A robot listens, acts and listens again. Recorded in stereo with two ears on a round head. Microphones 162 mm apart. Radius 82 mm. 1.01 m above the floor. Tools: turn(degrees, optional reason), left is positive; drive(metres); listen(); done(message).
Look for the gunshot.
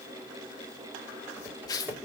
listen()
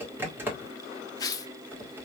listen()
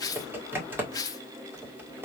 done("I can't make out a gunshot to turn to.")